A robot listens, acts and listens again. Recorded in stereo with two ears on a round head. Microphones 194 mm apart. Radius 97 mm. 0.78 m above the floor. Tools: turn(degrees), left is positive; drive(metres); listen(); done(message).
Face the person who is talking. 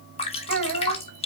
turn(degrees=-55)
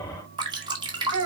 turn(degrees=-70)
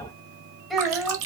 done("Found it: a child speaking, straight ahead.")